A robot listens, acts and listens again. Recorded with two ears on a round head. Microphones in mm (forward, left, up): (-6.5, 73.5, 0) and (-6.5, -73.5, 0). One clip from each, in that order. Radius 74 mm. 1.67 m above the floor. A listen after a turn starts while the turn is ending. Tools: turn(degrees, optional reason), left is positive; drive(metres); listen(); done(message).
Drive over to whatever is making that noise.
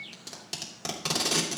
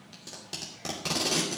turn(degrees=20, reason="The tape being pulled: about 20° left or 160° left.")
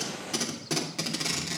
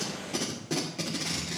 turn(degrees=135, reason="So it is at 135° left.")
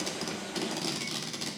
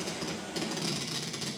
turn(degrees=10, reason="The tape being pulled is now 10° left.")
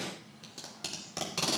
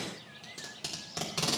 drive(metres=1.0)
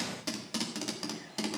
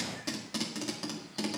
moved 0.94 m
turn(degrees=10, reason="The tape being pulled is now 10° left.")
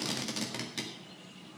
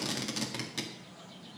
drive(metres=1.0)
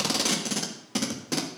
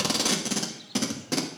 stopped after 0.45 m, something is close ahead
done("Arrived at the tape being pulled, straight ahead.")